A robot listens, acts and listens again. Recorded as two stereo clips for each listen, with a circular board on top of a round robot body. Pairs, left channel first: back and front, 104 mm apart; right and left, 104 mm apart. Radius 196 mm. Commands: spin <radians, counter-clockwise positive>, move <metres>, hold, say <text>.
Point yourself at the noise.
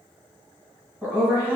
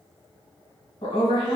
spin -1.22
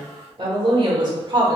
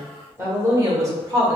spin 0.79
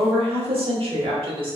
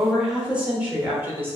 spin 0.44
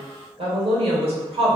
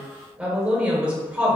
spin 0.17
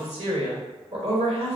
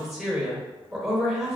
say Found it: a woman speaking, straight ahead.